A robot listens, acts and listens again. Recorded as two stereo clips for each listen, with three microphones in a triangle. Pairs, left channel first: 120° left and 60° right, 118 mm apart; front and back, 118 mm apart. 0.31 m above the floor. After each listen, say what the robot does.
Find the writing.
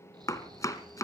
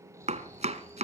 Keep listening.
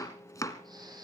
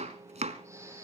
Keep listening.
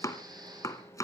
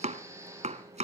I can't make out writing to turn to.